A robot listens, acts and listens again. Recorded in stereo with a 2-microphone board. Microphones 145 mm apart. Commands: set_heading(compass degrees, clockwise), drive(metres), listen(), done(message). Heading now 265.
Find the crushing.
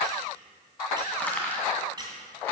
set_heading(235)
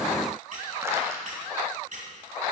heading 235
listen()
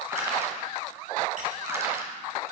set_heading(255)
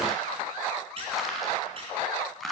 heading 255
done("Facing the crushing.")